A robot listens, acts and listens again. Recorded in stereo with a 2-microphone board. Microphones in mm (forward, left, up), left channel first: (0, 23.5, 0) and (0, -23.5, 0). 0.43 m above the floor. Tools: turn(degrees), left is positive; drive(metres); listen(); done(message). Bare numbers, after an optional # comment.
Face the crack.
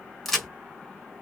turn(30)
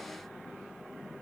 listen()
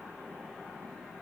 done("I heard a crack, but can't make it out now. It was about 25° right or 145° left.")